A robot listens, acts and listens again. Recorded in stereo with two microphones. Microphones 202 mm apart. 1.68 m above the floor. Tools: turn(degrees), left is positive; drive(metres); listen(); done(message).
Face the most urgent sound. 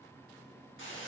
listen()
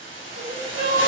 turn(degrees=-75)
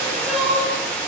done("Facing the crying, 1 to 2 m away.")